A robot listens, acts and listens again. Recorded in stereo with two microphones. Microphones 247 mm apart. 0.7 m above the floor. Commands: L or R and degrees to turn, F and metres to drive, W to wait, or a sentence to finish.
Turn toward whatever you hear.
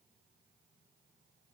W
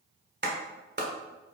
R40
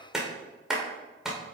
Found it: a clap, straight ahead.